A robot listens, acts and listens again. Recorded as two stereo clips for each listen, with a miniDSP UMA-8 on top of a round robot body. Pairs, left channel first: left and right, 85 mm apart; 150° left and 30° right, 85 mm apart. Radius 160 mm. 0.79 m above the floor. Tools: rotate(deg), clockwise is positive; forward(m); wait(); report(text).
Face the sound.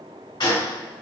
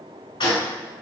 rotate(-120)
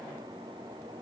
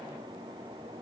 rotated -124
report("I heard a gunshot from this way, but can't make it out now.")